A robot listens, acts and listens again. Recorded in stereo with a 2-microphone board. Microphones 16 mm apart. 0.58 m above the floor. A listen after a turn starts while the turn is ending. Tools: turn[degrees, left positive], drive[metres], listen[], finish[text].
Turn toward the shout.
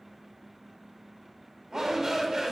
Thought: The shout: about 35° right or 145° right.
Action: turn[-35]
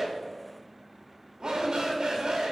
Thought: So it is at 105° right.
Action: turn[-105]
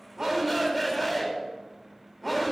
Action: finish[Facing the shout.]